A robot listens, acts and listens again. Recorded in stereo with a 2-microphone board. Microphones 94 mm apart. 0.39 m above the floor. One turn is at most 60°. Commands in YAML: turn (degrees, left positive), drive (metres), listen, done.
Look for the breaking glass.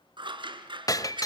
turn: 40
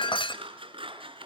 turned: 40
turn: 60
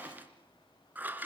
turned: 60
turn: 35
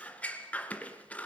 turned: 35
done: "Facing where the breaking glass came from. I can't hear it now."